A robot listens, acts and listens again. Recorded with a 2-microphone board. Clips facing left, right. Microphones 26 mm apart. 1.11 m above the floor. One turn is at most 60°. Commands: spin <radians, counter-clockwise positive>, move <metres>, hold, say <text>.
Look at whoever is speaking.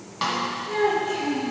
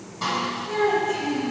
spin 0.61
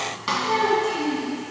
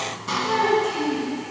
say Facing the child speaking.